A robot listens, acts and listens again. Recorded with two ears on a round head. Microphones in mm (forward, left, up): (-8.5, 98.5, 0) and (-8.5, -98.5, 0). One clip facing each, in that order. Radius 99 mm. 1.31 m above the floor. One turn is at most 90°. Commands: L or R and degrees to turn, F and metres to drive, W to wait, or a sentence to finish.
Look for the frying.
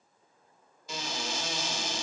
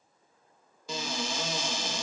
W
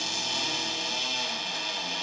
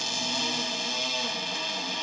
W
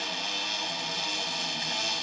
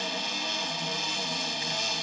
I can't make out frying, only a cupboard door.